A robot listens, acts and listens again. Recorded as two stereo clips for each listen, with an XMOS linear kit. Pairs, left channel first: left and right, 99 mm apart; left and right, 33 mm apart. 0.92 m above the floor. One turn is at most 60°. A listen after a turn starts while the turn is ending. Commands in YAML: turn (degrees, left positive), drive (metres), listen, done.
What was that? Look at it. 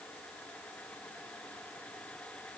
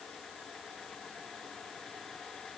listen: true
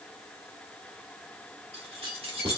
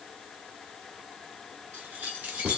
turn: -60
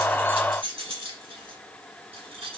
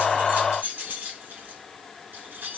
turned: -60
turn: -60
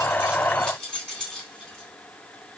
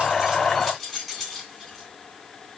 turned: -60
done: "Facing the keys jangling."